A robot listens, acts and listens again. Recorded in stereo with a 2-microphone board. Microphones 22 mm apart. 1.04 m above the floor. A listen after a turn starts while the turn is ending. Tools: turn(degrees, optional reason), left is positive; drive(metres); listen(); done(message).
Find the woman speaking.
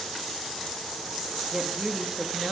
turn(degrees=-30)
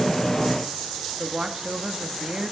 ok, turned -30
turn(degrees=-135, reason="So it is at 135° right.")
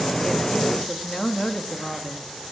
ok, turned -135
turn(degrees=25, reason="The woman speaking is now 25° left.")
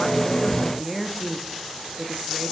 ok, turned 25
turn(degrees=-10, reason="The woman speaking is now 10° right.")
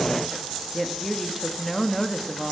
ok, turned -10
done("Found it: a woman speaking, straight ahead.")